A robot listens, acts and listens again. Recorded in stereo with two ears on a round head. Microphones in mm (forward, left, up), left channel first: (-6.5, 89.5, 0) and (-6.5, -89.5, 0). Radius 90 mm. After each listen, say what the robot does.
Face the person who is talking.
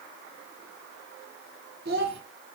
Turn 55° right.
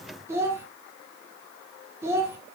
Turn 15° right.
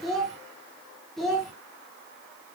Found it: a child speaking, straight ahead.